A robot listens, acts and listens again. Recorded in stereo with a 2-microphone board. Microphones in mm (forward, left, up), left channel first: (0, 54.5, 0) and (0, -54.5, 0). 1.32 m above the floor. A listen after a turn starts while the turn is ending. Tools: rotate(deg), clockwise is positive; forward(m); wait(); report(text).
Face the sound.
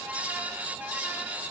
wait()
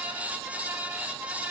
wait()
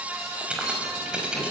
rotate(30)
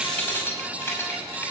rotate(-25)
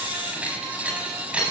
rotate(10)
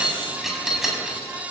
report("Found it: keys jangling, straight ahead.")